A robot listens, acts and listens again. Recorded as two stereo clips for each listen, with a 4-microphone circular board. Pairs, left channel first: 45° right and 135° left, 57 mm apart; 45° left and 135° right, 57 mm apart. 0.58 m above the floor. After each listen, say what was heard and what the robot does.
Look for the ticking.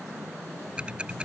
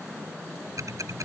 The ticking: 155° right. Turn 155° right.
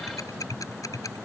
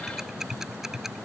The ticking is now 55° right. Turn 55° right.
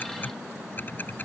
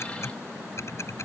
The ticking is now 10° left. Turn 10° left.
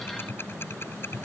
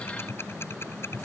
Facing the ticking.